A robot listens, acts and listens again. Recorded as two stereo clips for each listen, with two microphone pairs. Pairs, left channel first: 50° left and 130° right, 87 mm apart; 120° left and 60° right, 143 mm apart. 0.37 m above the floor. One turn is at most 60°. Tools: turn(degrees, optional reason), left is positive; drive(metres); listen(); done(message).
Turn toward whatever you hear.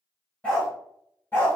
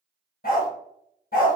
turn(degrees=60, reason="The dog barking: 120° left.")
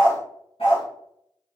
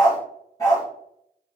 turn(degrees=50, reason="The dog barking is now 50° left.")
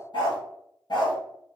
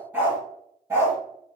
turn(degrees=10, reason="The dog barking is now 10° left.")
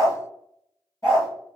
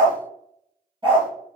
done("Found it: a dog barking, straight ahead.")